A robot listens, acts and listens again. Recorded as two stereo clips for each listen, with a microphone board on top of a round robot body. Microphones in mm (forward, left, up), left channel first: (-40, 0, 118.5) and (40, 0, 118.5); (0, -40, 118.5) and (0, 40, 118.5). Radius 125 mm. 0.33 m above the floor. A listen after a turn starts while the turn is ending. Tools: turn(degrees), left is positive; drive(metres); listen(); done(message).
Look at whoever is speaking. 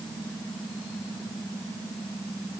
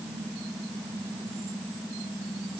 listen()
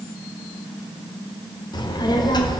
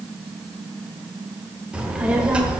turn(degrees=165)
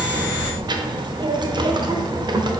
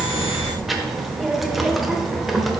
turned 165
done("Facing the child speaking, under 1 m away.")